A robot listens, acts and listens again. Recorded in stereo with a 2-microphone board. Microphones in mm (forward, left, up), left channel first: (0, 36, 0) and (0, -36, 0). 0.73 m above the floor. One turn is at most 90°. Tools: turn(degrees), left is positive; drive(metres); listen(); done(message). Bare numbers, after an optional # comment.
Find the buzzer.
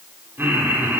listen()
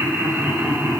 listen()
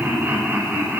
done("I can't make out a buzzer to turn to.")